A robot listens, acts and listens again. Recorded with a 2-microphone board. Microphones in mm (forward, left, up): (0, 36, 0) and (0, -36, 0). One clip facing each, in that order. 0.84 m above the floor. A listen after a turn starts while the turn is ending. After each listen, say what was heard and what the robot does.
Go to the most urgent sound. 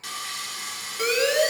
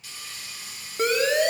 The siren: about 35° right or 145° right. Turn 35° right.
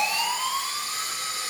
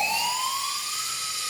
So it is at 10° right. Turn 10° right.
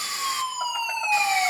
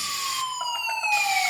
Drive 1.0 m forward.
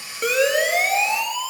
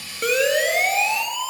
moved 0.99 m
Drive 1.0 m forward.
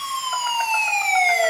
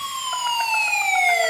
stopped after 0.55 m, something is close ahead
I am next to the siren.